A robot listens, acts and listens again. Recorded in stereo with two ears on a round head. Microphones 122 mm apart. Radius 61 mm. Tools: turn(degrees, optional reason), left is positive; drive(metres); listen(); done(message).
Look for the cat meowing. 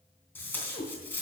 turn(degrees=-40, reason="The cat meowing: about 40° right or 140° right.")
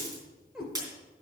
done("Found it: a cat meowing, straight ahead.")